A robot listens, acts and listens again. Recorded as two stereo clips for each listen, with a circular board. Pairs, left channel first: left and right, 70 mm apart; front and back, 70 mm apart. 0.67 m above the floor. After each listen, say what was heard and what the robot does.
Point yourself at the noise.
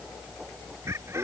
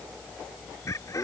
The laughter: 40° right. Turn 40° right.
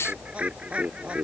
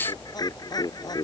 The laughter is now 15° right. Turn 15° right.
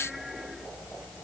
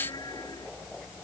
Keep listening.
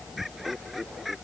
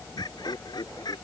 Facing the laughter.